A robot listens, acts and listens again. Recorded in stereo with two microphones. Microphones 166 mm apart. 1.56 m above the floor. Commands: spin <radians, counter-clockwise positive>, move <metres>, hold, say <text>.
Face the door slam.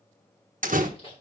spin -0.96
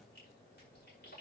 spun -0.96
hold
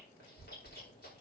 say I heard a door slam, but can't make it out now. It was about straight ahead or 70° right.